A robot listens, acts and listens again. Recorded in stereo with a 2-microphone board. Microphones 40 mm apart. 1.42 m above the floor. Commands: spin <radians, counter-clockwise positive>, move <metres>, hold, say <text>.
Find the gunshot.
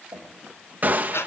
spin -0.79
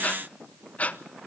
hold
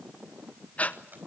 say I heard a gunshot, but can't make it out now. It was about straight ahead or 90° right.